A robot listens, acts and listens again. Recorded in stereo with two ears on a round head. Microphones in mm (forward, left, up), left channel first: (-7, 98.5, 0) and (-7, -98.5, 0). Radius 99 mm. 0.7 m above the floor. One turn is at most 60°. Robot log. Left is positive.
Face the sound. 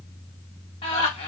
note: The laughter: about 25° left or 155° left.
cmd yaw +25
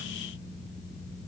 cmd idle
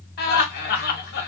note: So it is at 130° left.
cmd yaw +60
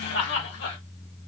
note: The laughter is now 55° left.
cmd yaw +55
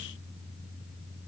cmd idle
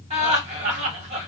note: The laughter is now 30° right.
cmd yaw -30
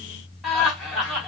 end: Facing the laughter, 1 to 2 m away.